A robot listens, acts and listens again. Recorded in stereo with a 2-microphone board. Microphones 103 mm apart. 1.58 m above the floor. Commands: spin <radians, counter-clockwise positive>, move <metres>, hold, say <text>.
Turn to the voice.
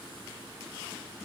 hold
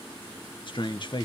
spin 0.96
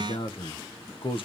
spin 1.13
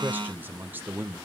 spin -0.35
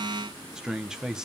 say Facing the man speaking, 1 to 2 m away.